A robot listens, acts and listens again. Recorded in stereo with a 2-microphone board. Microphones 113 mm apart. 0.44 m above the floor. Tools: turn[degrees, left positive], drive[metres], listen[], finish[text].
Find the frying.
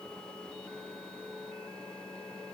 Action: listen[]
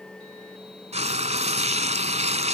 Action: turn[-90]
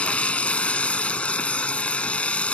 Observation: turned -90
Thought: So it is at 10° left.
Action: turn[10]
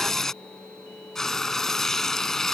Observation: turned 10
Action: finish[Found it: frying, straight ahead.]